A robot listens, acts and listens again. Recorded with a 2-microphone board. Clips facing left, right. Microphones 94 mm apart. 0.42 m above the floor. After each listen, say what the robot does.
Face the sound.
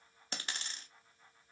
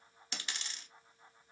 Turn 40° left.
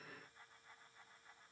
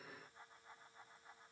Keep listening.
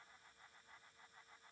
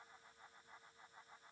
I heard a dropped coin, but can't make it out now. It was about straight ahead or 100° left.